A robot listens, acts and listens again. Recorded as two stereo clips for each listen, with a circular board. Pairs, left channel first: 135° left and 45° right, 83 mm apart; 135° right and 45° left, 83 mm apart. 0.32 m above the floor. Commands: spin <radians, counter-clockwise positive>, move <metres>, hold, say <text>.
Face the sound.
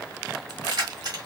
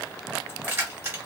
spin -0.26
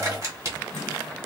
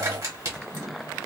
say Facing the keys jangling.